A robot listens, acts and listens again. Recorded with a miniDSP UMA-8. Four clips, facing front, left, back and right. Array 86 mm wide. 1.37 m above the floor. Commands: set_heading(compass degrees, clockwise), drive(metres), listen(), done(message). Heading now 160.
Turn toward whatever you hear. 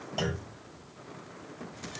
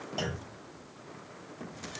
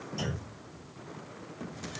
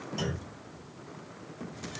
set_heading(135)
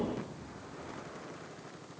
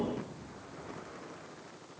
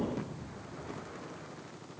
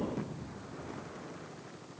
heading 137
done("Facing where the clunk came from. I can't hear it now.")